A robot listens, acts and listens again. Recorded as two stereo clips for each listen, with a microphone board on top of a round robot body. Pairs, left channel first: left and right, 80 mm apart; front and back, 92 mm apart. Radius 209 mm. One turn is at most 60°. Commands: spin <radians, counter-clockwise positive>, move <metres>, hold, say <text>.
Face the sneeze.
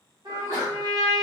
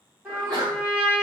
spin -1.05
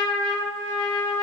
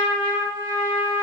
spin -1.05
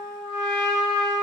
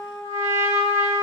spin -0.52
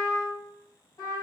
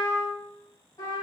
say Facing where the sneeze came from. I can't hear it now.